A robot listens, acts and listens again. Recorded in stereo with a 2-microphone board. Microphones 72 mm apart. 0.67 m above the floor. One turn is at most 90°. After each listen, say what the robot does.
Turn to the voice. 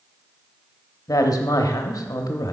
Turn 55° left.
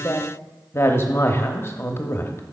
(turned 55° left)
Turn 45° left.
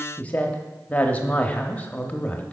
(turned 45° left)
Turn 25° left.
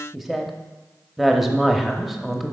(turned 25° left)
Found it: a woman speaking, straight ahead.